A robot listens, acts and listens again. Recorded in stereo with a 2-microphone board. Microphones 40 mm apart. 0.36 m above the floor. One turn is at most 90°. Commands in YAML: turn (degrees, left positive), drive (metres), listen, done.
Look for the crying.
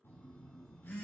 listen: true
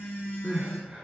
turn: -45
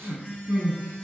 turn: -90
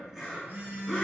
done: "Facing the crying."